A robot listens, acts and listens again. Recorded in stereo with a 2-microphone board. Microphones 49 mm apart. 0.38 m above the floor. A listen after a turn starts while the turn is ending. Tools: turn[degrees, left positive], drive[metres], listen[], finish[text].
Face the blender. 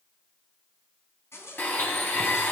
Thought: The blender: about 45° left or 135° left.
Action: turn[45]
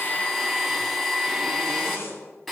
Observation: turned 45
Action: finish[Found it: a blender, straight ahead.]